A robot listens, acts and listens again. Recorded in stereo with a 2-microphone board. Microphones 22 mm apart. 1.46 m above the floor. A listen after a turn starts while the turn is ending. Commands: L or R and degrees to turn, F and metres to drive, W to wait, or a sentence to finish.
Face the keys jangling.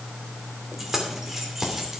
R25
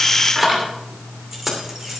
R30
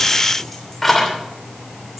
Facing the keys jangling, 2 to 4 m away.